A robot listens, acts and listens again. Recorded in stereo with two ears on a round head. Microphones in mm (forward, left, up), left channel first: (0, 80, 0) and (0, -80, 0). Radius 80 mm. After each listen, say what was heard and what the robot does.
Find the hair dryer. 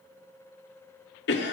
Keep listening.
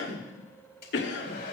The hair dryer: about 60° left or 120° left. Turn 60° left.
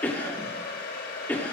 So it is at 65° left. Turn 65° left.
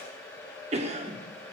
The hair dryer is now 15° left. Turn 15° left.
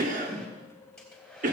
Found it: a hair dryer, straight ahead.